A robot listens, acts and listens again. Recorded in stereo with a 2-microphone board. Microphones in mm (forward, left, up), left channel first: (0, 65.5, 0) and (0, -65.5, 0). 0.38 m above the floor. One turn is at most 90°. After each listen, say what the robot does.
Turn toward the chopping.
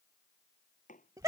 Turn 90° left.
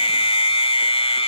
Keep listening.
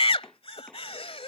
Keep listening.
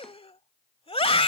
I heard chopping from this way, but can't make it out now.